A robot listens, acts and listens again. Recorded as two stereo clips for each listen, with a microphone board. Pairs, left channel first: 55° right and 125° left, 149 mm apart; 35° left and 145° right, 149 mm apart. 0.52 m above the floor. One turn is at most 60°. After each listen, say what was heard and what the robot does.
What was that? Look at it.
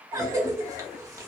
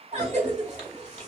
The cough: 170° right. Turn 60° right.
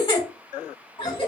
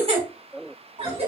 The cough is now 105° right. Turn 60° right.
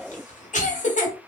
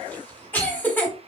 The cough is now 45° right. Turn 45° right.
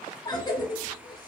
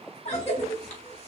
Facing the cough.